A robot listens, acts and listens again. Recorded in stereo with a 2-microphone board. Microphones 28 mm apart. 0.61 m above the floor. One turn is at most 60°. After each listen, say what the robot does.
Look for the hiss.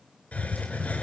Turn 60° left.
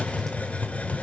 Turn 60° left.
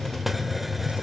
Found it: a hiss, straight ahead.